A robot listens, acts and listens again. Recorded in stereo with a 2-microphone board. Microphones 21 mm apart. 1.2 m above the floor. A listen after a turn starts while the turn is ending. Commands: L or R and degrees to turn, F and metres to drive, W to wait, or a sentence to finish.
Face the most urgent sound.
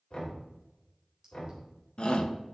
L50
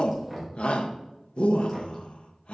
L75
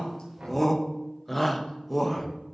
L10
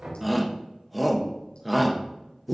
Found it: a shout, straight ahead.